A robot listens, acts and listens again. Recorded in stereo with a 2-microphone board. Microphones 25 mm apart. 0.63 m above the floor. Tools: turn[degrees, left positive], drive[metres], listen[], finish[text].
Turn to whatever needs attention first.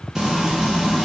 Action: listen[]
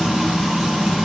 Action: listen[]
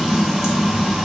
Action: finish[I can't make out anything urgent to turn to.]